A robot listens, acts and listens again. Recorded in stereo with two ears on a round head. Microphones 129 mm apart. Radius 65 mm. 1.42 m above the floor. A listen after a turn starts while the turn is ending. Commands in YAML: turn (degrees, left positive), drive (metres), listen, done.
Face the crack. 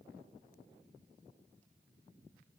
listen: true
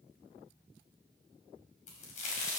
turn: 55
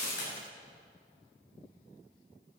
listen: true
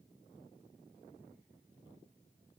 done: "I heard a crack, but can't make it out now. It was about straight ahead or 70° left."